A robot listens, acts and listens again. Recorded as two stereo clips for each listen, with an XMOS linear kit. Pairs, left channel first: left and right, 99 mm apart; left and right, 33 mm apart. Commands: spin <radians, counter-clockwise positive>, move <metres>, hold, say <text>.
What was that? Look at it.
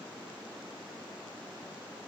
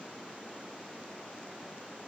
hold
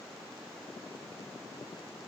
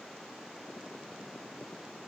hold
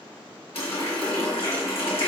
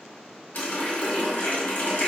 spin 1.57
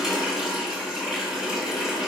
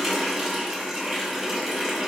say Facing the running tap.